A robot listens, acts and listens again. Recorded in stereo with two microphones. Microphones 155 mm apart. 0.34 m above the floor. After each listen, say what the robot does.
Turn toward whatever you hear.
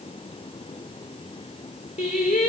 Turn 45° left.
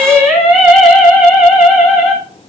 Turn 10° right.
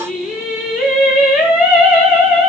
Turn 10° right.
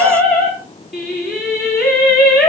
Facing the singing, over 4 m away.